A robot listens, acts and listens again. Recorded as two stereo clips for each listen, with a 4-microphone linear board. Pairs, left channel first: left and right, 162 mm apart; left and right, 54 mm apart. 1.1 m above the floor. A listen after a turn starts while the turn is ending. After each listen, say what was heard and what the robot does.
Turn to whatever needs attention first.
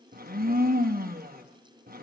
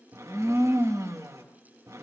Keep listening.
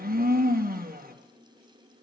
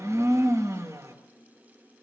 Keep listening.
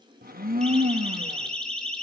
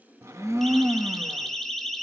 Turn 30° left.
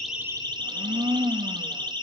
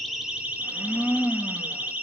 So it is at 25° right. Turn 25° right.
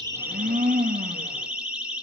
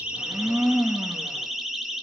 Found it: a siren, straight ahead.